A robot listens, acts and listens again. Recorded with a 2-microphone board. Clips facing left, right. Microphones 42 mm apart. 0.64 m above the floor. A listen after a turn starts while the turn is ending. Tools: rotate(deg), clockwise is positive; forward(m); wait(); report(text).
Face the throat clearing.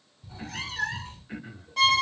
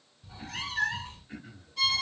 rotate(-25)
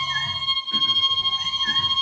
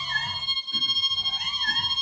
wait()
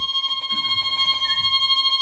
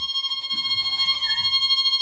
wait()
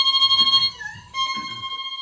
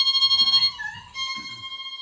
report("I heard throat clearing, but can't make it out now. It was about straight ahead or 130° left.")